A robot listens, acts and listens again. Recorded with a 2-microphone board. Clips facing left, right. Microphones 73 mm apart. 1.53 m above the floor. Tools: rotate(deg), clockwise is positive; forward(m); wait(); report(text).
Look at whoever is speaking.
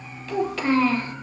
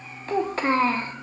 rotate(35)
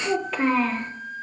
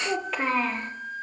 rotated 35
report("Found it: a child speaking, straight ahead, under 1 m away.")